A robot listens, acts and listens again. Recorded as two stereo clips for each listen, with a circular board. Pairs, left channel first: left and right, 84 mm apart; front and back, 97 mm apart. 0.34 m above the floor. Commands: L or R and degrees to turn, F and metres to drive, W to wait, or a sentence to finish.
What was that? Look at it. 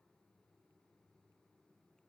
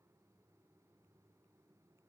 W
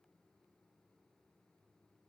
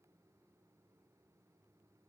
W
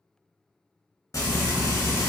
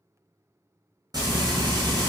L135
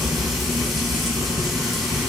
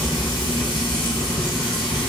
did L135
Found it: frying, straight ahead.